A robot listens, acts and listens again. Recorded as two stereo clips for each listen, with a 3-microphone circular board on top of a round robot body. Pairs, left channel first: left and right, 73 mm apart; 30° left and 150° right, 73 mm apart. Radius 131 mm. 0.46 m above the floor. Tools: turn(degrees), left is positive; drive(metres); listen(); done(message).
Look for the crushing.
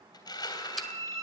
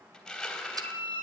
turn(degrees=115)
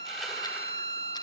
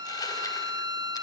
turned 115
listen()
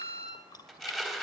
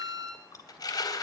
done("Found it: crushing, straight ahead.")